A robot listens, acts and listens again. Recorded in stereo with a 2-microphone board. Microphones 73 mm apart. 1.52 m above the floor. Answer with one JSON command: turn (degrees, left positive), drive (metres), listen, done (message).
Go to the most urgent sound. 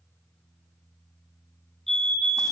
{"turn": 30}
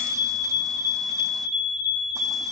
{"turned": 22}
{"turn": -15}
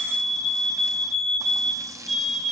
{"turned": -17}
{"drive": 1.0}
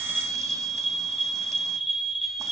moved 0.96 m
{"drive": 1.0}
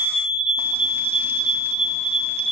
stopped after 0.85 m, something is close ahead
{"done": "Arrived at the fire alarm, straight ahead."}